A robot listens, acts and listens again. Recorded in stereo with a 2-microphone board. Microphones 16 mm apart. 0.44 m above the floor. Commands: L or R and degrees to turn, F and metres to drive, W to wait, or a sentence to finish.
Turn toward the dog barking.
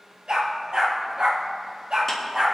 R90
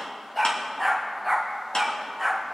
Found it: a dog barking, straight ahead, over 4 m away.